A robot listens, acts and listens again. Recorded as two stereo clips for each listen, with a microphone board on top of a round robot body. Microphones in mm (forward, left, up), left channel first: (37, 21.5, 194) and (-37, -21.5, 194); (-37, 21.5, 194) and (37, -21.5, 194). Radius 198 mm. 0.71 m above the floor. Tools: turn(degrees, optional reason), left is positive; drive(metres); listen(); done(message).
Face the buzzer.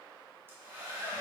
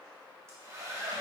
listen()
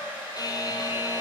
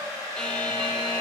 turn(degrees=70, reason="The buzzer: 70° left.")
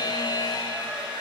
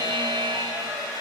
done("Facing the buzzer, under 1 m away.")